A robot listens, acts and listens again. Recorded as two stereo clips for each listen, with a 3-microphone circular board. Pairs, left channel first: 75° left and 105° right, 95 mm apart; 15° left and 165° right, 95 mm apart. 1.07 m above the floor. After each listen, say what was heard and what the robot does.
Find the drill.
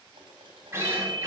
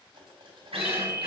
The drill: 165° right. Turn 165° right.
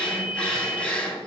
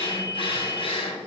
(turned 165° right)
Facing the drill, 2 to 4 m away.